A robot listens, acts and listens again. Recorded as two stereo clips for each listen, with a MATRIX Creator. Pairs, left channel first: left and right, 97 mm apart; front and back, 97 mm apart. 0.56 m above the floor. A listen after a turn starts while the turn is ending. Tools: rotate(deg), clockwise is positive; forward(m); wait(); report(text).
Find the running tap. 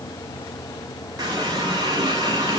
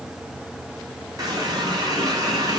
rotate(135)
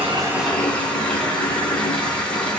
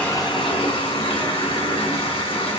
rotate(-10)
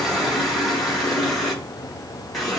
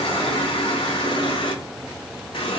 report("Facing the running tap, 1 to 2 m away.")